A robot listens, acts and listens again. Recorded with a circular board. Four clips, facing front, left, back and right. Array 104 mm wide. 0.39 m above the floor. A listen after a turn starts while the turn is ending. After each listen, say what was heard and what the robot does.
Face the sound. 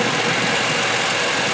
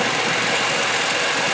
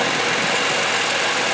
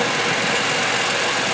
Keep listening.
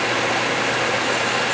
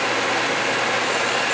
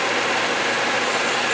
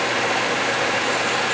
Keep listening.
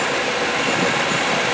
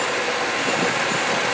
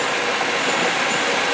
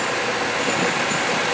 I can't make out anything to turn to.